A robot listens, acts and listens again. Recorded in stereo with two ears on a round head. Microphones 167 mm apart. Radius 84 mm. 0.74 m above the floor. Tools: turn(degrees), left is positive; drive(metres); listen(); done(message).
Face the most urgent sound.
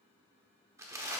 listen()
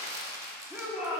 turn(degrees=-30)
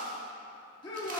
turn(degrees=25)
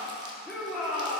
done("Facing the shout.")